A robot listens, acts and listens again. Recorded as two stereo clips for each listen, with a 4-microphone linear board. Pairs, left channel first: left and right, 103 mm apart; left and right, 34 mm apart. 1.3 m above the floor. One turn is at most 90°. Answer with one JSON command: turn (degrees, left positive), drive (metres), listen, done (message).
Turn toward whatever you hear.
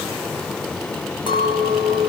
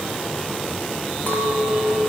{"turn": 55}
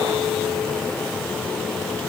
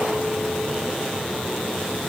{"listen": true}
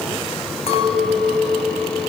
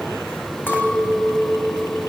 {"turn": 70}
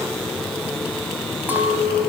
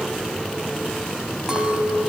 {"turn": -15}
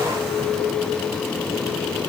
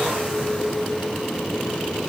{"done": "Facing the clink."}